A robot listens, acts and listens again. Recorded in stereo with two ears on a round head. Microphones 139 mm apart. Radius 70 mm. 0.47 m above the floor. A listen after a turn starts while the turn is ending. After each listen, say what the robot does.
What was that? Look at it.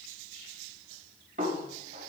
Turn 50° right.
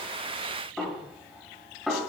Facing the snare drum, 2 to 4 m away.